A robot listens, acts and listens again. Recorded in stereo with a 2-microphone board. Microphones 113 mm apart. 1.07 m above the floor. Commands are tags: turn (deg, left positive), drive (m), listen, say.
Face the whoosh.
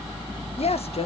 <listen/>
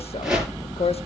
<turn deg="-30"/>
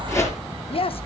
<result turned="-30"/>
<turn deg="25"/>
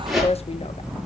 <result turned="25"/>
<say>Facing the whoosh.</say>